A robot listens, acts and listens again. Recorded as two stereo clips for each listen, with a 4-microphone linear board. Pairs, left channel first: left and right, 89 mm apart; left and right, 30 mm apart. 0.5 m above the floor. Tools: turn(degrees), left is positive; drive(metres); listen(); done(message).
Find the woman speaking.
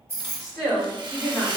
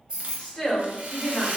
turn(degrees=35)
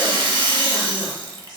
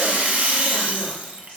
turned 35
listen()
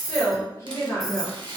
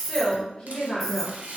turn(degrees=25)
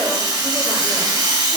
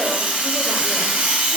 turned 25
listen()
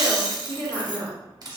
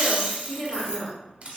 turn(degrees=30)
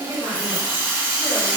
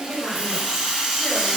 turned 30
turn(degrees=125)
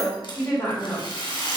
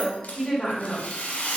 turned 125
turn(degrees=25)
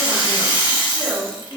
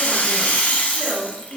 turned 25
done("Facing the woman speaking, 1 to 2 m away.")